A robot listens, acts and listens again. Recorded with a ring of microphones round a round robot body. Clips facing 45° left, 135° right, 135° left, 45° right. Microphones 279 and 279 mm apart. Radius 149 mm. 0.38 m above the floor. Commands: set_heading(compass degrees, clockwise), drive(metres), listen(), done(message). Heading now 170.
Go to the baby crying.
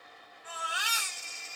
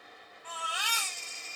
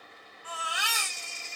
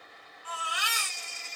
set_heading(45)
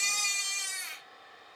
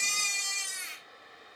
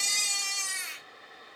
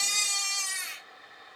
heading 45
drive(1.0)
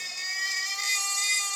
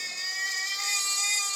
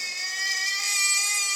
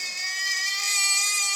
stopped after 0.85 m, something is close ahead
done("I am next to the baby crying.")